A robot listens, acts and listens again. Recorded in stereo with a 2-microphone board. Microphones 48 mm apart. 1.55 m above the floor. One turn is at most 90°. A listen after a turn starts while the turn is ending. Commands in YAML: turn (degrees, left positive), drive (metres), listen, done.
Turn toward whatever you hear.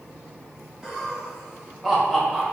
turn: 30
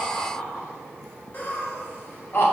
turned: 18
turn: 90
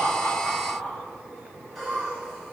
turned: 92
done: "Found it: laughter, straight ahead."